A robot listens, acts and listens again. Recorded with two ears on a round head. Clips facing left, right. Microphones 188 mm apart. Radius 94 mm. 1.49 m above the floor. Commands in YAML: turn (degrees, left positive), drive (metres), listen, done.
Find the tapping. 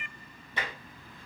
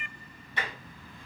turn: 75
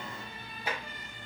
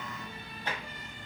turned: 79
turn: 10
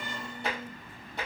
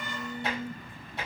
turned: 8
done: "Found it: tapping, straight ahead."